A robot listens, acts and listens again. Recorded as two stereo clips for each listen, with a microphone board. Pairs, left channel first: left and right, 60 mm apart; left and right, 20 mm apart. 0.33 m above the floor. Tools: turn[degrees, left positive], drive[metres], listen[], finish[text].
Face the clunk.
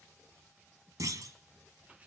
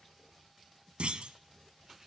Thought: The clunk: about 70° right or 110° right.
Action: turn[-70]
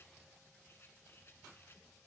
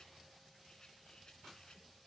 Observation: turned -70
Action: listen[]
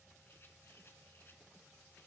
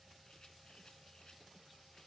Action: finish[I heard a clunk, but can't make it out now. It was about straight ahead or 40° right.]